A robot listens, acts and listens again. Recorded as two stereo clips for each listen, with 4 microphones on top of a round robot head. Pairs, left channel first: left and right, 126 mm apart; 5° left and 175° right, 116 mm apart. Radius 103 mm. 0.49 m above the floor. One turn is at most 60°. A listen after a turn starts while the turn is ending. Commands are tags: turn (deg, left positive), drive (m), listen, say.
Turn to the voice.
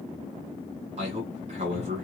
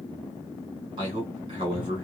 <turn deg="-60"/>
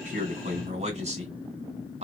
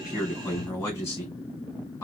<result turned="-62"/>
<turn deg="-60"/>
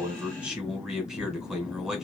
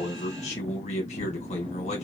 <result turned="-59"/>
<say>Facing the man speaking.</say>